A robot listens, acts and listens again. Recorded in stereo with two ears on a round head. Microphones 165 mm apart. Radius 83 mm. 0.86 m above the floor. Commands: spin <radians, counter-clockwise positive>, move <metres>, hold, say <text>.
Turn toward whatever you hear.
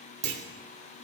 spin -1.05
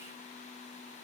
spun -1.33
hold
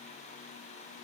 say I heard a clunk, but can't make it out now. It was about 15° left or 45° right.